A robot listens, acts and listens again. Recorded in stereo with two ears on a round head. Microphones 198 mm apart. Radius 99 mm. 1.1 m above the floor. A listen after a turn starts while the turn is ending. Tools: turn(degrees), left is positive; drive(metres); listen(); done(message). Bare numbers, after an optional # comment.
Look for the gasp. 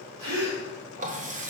turn(-90)
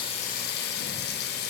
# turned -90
done("I heard a gasp from this way, but can't make it out now.")